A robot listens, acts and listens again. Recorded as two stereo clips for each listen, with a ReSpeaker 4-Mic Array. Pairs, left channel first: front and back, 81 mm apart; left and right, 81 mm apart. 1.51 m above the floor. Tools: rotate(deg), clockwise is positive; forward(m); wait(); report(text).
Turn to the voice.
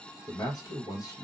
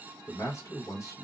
rotate(-40)
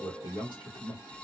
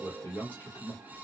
rotate(-20)
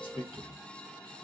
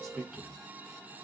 report("Facing the man speaking.")